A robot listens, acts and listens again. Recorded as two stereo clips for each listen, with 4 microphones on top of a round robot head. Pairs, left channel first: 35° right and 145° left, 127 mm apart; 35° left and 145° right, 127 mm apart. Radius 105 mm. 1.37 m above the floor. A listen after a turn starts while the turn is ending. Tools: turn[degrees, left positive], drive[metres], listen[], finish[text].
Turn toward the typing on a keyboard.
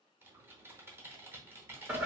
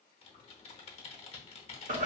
Thought: The typing on a keyboard: 70° left.
Action: turn[70]
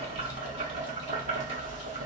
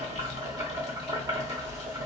Action: listen[]
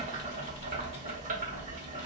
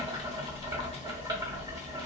Action: listen[]
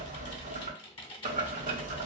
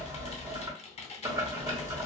Action: finish[Found it: typing on a keyboard, straight ahead.]